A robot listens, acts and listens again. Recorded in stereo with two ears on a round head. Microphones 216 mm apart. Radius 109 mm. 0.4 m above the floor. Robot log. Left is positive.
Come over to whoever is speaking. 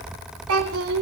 note: The child speaking: about 60° right or 120° right.
cmd yaw -60
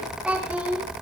cmd fwd 1.0
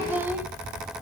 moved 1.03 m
note: The child speaking is now 10° right.
cmd yaw -10
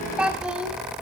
cmd fwd 1.0
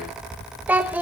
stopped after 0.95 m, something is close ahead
note: The child speaking is now 10° right.
cmd yaw -10
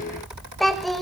end: I am next to the child speaking.